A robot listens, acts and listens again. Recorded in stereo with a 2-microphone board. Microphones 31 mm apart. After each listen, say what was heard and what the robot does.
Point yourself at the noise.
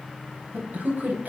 Turn 90° right.
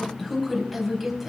Found it: a man speaking, straight ahead, over 4 m away.